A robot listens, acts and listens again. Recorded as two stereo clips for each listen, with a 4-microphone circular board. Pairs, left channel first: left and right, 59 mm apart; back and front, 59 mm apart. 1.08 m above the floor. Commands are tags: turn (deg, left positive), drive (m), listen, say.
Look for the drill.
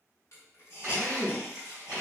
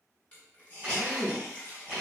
<turn deg="-65"/>
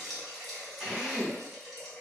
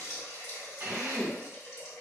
<say>Facing the drill.</say>